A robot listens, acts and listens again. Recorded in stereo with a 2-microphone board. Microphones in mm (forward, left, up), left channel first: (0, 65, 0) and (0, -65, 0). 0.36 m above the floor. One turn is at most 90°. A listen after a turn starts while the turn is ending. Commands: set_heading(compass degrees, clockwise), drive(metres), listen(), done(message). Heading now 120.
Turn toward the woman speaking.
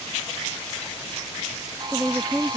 set_heading(90)
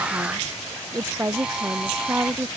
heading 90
set_heading(105)
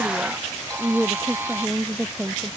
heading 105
done("Facing the woman speaking.")